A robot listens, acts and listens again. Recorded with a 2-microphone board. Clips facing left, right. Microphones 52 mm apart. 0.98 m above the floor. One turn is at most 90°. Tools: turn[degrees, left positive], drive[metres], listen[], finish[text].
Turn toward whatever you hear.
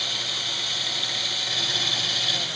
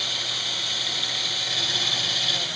Action: listen[]
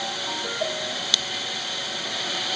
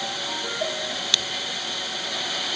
Action: listen[]
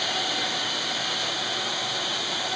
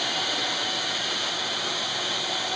Action: finish[I can't make out anything to turn to.]